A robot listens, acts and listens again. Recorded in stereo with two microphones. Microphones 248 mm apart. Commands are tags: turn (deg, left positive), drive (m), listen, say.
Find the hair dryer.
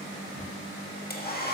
<turn deg="40"/>
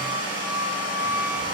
<turn deg="100"/>
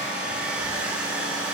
<say>Found it: a hair dryer, straight ahead.</say>